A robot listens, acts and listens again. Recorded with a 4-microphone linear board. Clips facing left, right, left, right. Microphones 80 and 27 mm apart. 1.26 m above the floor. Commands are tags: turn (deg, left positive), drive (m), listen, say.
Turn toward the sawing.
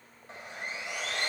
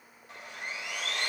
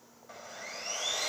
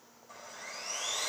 <turn deg="35"/>
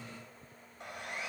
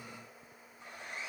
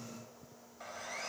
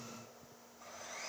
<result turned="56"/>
<turn deg="90"/>
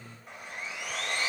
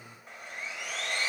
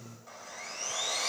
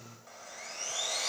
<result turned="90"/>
<say>Facing the sawing, over 4 m away.</say>